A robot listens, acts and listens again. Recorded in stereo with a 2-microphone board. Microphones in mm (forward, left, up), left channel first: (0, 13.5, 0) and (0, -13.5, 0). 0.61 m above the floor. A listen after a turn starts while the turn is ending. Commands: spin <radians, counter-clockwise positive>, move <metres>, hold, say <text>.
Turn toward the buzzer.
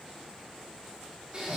hold
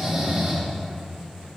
hold
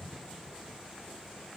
say I can't make out a buzzer, only snoring.